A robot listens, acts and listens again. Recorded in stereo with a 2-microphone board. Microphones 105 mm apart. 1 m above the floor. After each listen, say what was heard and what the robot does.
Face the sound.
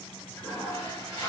The toilet flushing: about 25° left or 155° left. Turn 25° left.
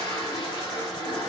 So it is at 125° left. Turn 125° left.
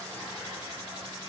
The toilet flushing is now 15° right. Turn 15° right.
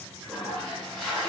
Facing the toilet flushing.